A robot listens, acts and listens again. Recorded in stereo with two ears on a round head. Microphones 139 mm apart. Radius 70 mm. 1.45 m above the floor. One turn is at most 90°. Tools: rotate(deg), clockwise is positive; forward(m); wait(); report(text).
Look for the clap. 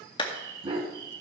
rotate(-30)
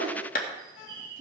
rotate(-90)
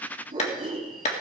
rotate(-45)
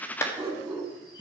rotate(-20)
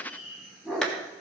report("Found it: a clap, straight ahead, 1 to 2 m away.")